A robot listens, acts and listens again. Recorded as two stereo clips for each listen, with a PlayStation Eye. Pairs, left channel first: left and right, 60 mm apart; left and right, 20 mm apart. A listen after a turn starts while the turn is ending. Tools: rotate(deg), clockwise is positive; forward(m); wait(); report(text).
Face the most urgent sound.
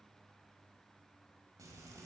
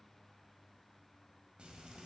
wait()
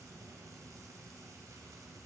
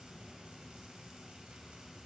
wait()
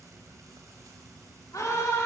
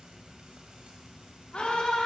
rotate(-65)
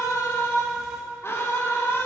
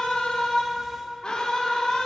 rotate(-50)
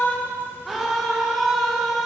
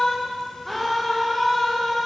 report("Facing the scream.")